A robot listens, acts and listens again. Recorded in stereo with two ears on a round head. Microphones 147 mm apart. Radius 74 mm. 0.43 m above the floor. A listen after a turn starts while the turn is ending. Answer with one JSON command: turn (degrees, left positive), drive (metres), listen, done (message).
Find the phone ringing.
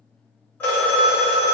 {"turn": 30}
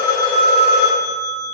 {"turn": 135}
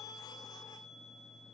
{"listen": true}
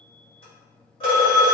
{"turn": 35}
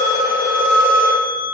{"turn": 10}
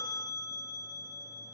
{"listen": true}
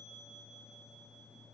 {"listen": true}
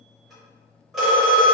{"done": "Facing the phone ringing, under 1 m away."}